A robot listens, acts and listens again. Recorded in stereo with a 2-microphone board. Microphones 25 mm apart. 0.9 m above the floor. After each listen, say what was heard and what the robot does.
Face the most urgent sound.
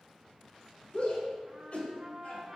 The shout: about 55° left or 125° left. Turn 55° left.
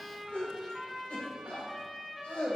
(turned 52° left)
So it is at 75° left. Turn 75° left.
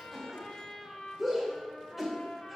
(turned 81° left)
Found it: a shout, straight ahead.